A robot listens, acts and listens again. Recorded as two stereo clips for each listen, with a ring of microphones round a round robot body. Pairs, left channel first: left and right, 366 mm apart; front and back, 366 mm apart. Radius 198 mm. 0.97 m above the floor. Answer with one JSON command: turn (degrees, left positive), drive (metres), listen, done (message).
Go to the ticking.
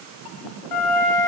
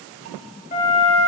{"listen": true}
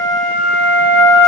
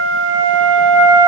{"listen": true}
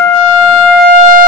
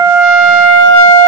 {"done": "I can't make out ticking to turn to."}